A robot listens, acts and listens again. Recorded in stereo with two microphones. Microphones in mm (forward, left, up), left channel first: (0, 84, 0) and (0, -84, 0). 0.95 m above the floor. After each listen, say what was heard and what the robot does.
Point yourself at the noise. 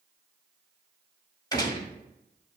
The gunshot: about 25° left or 155° left. Turn 25° left.
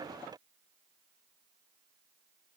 Keep listening.
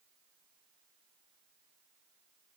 I heard a gunshot, but can't make it out now. It was about straight ahead or 130° left.